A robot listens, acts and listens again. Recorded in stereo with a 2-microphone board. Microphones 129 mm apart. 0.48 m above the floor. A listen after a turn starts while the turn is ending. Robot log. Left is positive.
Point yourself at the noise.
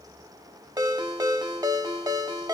note: The ringtone: about 30° right or 150° right.
cmd yaw -30
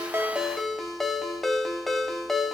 end: Facing the ringtone.